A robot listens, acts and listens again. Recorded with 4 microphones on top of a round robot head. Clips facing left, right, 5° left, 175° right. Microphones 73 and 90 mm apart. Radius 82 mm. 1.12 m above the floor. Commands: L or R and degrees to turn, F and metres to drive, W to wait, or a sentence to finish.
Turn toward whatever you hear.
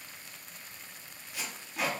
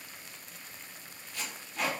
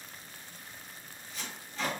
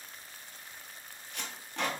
L165
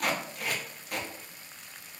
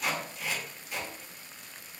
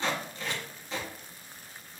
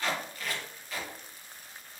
L65
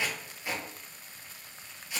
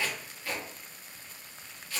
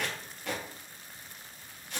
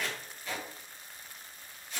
L20
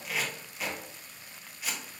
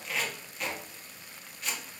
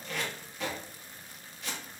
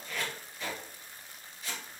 Facing the tape being pulled, 1 to 2 m away.